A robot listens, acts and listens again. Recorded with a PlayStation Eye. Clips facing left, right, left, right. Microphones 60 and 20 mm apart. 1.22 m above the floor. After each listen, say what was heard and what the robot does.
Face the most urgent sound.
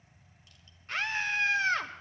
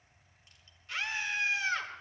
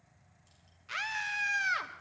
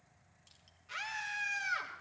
The scream: about 45° left or 135° left. Turn 45° left.
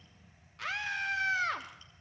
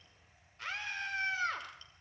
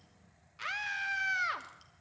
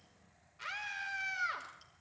So it is at 90° left. Turn 90° left.
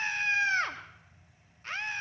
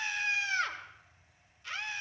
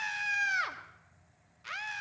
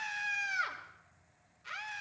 The scream is now 45° left. Turn 45° left.
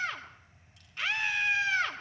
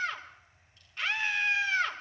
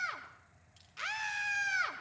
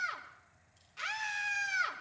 Facing the scream.